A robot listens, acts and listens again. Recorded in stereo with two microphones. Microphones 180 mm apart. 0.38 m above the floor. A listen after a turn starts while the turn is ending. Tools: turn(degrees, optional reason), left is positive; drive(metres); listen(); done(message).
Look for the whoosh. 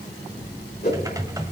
turn(degrees=65, reason="The whoosh: about 65° left or 115° left.")
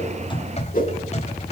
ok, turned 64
turn(degrees=50, reason="So it is at 50° left.")
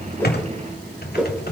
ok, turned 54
done("Found it: a whoosh, straight ahead, 2 to 4 m away.")